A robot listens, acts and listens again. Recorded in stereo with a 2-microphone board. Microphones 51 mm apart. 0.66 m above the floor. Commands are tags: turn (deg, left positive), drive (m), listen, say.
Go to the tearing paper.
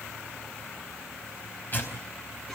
<turn deg="40"/>
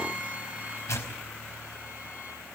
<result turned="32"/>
<turn deg="105"/>
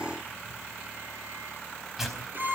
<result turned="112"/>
<drive m="1.0"/>
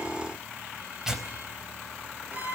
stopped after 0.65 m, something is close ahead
<turn deg="-10"/>
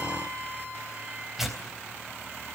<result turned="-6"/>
<say>Blocked. The tearing paper is further on, straight ahead.</say>